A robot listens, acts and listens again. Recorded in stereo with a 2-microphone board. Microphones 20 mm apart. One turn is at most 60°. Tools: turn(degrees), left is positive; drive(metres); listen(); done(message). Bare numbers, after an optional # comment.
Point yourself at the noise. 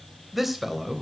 turn(-30)
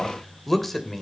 # So it is at 10° left.
turn(10)
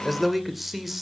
# The man speaking is now 10° right.
turn(-10)
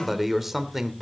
# The man speaking is now 15° right.
turn(-15)
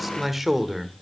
# The man speaking is now 15° right.
turn(-15)
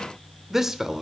# The man speaking is now 25° right.
turn(-25)
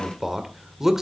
# The man speaking is now 20° right.
turn(-20)
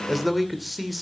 done("Facing the man speaking.")